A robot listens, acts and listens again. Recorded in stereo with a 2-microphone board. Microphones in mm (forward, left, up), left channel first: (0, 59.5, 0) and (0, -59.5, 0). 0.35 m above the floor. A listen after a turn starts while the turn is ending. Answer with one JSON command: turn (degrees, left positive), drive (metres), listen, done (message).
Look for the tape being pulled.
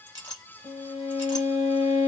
{"listen": true}
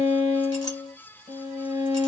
{"listen": true}
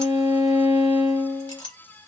{"done": "I can't make out tape being pulled to turn to."}